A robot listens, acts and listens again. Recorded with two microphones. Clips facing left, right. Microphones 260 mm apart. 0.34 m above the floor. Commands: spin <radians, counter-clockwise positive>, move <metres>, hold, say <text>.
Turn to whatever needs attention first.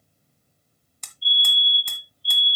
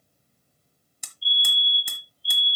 spin 0.35
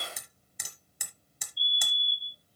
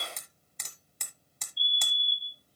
say Facing the fire alarm, 2 to 4 m away.